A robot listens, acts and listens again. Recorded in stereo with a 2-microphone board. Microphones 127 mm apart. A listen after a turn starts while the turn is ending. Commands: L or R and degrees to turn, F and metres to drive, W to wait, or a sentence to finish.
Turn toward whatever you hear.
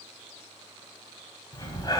L35
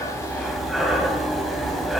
Found it: breathing, straight ahead.